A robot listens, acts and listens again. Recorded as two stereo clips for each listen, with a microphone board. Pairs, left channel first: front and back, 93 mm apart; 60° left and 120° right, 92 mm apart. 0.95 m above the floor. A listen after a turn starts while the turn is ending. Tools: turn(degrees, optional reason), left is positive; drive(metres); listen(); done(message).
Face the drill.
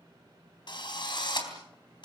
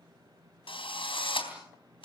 turn(degrees=35, reason="The drill: 35° left.")
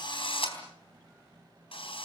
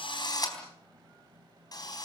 turn(degrees=15, reason="The drill is now 15° left.")
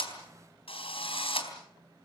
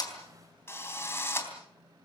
done("Found it: a drill, straight ahead, 2 to 4 m away.")